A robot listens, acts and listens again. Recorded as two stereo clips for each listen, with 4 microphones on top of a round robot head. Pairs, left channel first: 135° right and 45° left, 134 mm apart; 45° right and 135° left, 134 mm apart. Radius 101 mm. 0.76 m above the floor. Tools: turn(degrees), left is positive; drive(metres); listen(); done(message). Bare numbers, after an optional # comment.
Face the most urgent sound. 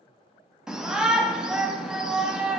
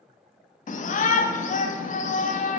# The shout: 35° right.
turn(-35)
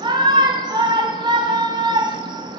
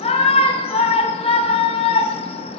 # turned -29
done("Facing the shout.")